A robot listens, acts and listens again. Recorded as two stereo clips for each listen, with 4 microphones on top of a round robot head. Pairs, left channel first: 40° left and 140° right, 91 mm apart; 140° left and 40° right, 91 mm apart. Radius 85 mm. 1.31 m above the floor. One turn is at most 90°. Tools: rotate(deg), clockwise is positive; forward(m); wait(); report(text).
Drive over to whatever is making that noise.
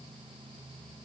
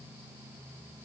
wait()
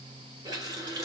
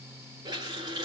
rotate(85)
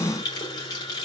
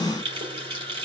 forward(1.0)
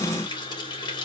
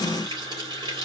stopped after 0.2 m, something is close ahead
report("Blocked. The running tap is further on, straight ahead.")